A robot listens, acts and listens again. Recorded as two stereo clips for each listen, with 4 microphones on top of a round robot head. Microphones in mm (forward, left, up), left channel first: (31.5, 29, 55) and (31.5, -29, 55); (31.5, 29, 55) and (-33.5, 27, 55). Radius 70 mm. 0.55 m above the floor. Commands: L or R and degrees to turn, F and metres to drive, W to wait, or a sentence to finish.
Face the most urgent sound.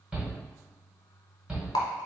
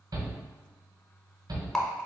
R165
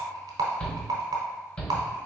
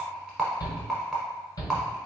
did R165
L20
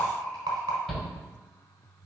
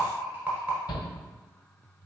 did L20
Found it: a shout, straight ahead.